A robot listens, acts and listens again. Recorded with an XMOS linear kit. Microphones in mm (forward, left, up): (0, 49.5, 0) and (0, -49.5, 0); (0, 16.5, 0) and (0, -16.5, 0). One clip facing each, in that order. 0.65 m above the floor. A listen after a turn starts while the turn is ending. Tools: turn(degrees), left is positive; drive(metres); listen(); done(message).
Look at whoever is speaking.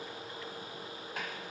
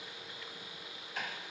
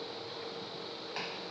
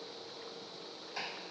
listen()
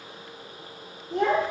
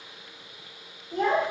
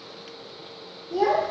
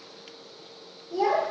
turn(degrees=75)
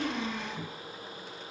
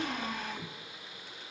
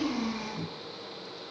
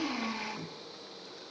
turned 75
listen()
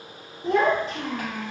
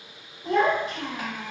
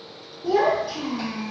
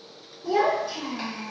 turn(degrees=25)
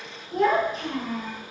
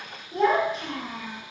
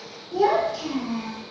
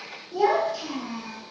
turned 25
done("Facing the child speaking.")